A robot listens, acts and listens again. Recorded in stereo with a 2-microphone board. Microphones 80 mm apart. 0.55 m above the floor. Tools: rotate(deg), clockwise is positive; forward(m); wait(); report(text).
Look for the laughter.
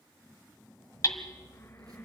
wait()
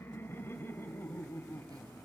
rotate(-30)
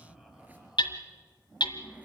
wait()
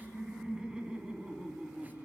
rotate(10)
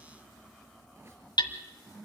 wait()
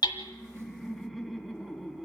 report("Facing the laughter.")